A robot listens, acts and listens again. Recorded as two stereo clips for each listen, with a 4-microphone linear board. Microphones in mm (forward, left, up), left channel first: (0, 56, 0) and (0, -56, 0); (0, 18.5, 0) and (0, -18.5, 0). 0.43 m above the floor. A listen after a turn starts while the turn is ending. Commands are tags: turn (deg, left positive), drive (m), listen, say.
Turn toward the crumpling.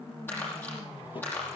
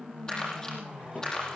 <turn deg="20"/>
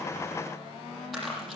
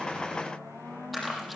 <say>Facing the crumpling, over 4 m away.</say>